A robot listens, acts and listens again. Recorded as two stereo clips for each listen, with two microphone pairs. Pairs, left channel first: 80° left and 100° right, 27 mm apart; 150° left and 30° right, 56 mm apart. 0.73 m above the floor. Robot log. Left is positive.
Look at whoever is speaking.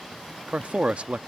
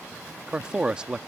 note: The man speaking: 105° right.
cmd yaw -105
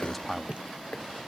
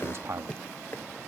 end: Found it: a man speaking, straight ahead.